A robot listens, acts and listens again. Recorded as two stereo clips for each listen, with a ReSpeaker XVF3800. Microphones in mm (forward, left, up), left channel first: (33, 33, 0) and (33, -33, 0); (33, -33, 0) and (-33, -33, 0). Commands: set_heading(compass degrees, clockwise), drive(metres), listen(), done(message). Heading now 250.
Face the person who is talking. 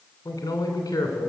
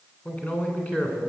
set_heading(185)
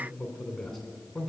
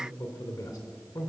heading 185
done("Found it: a man speaking, straight ahead.")